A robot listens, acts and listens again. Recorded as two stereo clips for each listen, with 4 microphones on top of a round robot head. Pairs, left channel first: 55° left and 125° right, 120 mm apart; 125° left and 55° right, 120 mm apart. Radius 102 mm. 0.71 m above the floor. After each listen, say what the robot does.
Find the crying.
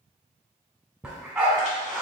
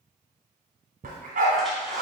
Keep listening.
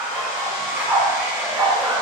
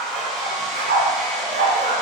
Keep listening.
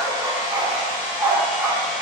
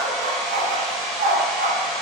I can't make out crying, only a hair dryer and a dog barking.